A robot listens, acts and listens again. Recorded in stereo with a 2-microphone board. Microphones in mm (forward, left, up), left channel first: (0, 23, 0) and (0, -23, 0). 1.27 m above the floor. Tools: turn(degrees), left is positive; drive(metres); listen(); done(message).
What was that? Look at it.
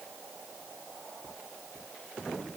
listen()
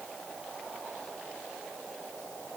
listen()
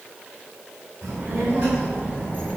turn(degrees=-40)
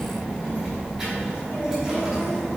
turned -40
done("Found it: a child speaking, straight ahead, over 4 m away.")